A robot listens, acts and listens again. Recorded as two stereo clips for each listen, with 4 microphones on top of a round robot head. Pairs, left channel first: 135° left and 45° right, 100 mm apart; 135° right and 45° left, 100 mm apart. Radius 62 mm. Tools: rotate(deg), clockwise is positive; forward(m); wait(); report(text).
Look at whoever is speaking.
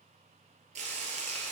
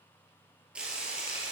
wait()
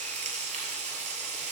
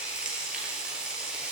wait()
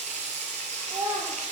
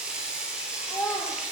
rotate(70)
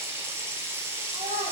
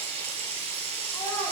rotate(50)
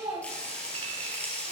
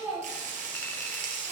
rotate(20)
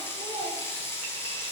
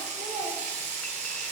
rotate(10)
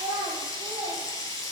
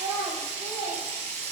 report("Facing the child speaking, 2 to 4 m away.")